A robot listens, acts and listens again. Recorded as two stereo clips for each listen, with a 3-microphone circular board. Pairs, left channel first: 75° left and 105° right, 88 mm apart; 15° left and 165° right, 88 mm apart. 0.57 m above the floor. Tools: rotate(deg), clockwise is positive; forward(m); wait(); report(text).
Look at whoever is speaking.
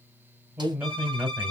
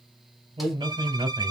rotate(170)
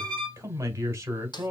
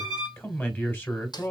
rotate(50)
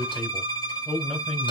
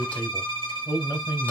rotate(10)
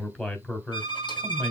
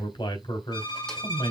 report("Facing the man speaking, 1 to 2 m away.")